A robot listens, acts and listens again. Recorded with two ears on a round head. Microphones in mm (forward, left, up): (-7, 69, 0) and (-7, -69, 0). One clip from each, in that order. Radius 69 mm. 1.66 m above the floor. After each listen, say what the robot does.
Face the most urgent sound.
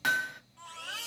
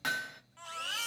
Turn 30° right.
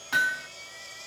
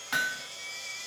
Turn 115° right.
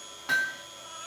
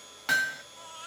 Keep listening.
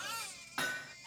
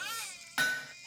Turn 55° right.
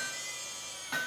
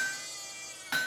Found it: a baby crying, straight ahead, 1 to 2 m away.